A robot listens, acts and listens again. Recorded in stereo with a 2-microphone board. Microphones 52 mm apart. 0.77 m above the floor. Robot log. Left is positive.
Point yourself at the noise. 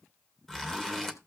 cmd yaw +30
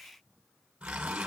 note: So it is at 20° right.
cmd yaw -20
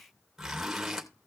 end: Found it: a zipper, straight ahead, 2 to 4 m away.